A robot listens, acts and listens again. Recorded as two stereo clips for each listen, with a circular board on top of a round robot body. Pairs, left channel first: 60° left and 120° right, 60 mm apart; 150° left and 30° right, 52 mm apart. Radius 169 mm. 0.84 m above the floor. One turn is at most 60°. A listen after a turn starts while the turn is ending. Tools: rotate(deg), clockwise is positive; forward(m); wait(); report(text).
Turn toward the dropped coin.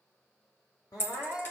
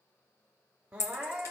rotate(-60)
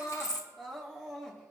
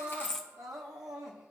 rotate(-55)
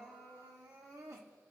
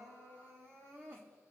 report("I heard a dropped coin from this way, but can't make it out now.")